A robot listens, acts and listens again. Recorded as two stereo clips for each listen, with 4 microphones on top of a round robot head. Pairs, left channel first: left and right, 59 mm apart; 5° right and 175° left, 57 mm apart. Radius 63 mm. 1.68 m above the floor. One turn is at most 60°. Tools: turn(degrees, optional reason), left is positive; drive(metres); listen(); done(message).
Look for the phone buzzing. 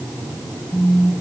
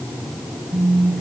turn(degrees=60, reason="The phone buzzing: 175° left.")
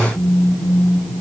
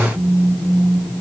turn(degrees=60, reason="The phone buzzing is now 120° left.")
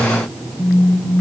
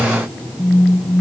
turn(degrees=55, reason="The phone buzzing is now 55° left.")
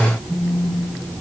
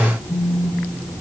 done("Facing the phone buzzing, 2 to 4 m away.")